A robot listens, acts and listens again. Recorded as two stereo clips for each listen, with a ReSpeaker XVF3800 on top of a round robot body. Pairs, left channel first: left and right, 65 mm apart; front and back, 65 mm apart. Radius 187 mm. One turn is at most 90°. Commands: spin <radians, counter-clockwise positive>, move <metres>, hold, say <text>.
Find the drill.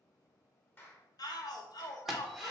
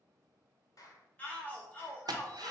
spin 1.57
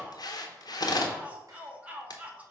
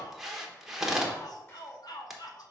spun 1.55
spin 1.57
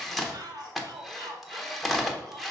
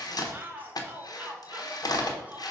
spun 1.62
say Facing the drill, 1 to 2 m away.